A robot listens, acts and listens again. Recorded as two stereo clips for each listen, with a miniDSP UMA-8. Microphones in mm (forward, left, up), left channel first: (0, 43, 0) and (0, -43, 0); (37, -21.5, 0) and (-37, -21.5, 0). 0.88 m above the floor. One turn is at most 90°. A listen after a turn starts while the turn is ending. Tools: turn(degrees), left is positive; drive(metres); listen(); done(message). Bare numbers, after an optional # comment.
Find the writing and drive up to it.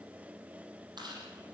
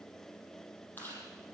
listen()
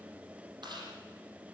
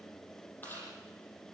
listen()
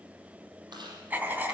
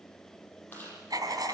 # The writing: 160° right.
turn(-90)
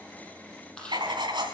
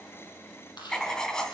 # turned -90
# The writing is now 80° right.
turn(-80)
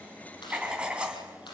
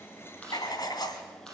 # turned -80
# The writing is now 15° right.
turn(-15)
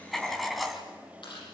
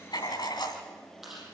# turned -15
drive(1.0)
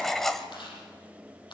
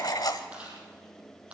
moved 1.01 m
drive(1.0)
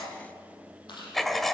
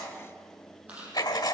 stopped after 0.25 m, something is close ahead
done("I am next to the writing.")